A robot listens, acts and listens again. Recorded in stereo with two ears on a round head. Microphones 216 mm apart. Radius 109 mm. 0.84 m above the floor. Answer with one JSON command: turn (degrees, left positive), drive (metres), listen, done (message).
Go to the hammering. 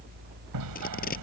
{"turn": -90}
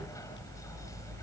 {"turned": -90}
{"listen": true}
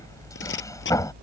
{"turn": 15}
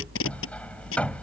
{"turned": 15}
{"drive": 1.0}
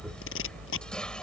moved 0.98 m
{"listen": true}
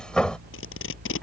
{"drive": 1.0}
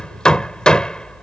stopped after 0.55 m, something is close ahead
{"done": "Blocked. The hammering is further on, straight ahead."}